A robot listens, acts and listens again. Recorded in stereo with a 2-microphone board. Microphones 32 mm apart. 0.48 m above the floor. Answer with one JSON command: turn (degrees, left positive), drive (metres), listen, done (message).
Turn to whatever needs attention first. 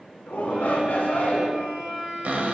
{"turn": 65}
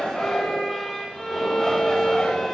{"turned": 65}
{"turn": 20}
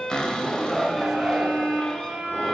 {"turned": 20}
{"turn": 10}
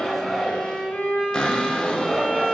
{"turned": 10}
{"done": "Facing the shout."}